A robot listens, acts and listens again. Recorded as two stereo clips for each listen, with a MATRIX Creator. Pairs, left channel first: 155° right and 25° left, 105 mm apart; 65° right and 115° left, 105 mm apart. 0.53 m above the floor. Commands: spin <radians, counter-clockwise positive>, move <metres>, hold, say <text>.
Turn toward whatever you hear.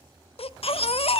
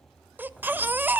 spin -3.05
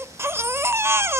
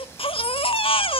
spin -0.70
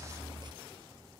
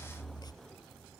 spin -0.35
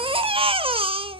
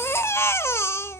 say Found it: a baby crying, straight ahead.